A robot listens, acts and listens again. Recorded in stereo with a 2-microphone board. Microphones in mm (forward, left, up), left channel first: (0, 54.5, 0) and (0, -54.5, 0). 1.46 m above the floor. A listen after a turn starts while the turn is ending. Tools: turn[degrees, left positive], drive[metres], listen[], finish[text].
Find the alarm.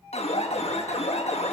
Thought: The alarm: about 75° left or 105° left.
Action: turn[75]
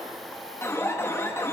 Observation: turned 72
Thought: So it is at 25° left.
Action: turn[25]
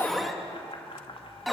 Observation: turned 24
Action: finish[Facing the alarm, 1 to 2 m away.]